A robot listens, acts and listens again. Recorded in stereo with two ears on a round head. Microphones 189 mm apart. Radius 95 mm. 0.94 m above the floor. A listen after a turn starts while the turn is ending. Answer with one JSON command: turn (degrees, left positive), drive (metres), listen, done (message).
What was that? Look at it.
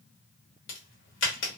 {"turn": 65}
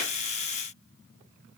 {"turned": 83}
{"listen": true}
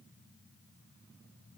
{"done": "I heard a crack, but can't make it out now. It was about 20° right or 35° left."}